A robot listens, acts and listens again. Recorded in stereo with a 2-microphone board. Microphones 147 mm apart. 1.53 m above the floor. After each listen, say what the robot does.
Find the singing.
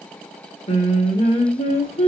Turn 45° left.
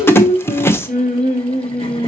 Turn 85° left.
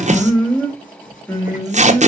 Turn 10° left.
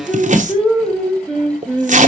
Found it: singing, straight ahead, 2 to 4 m away.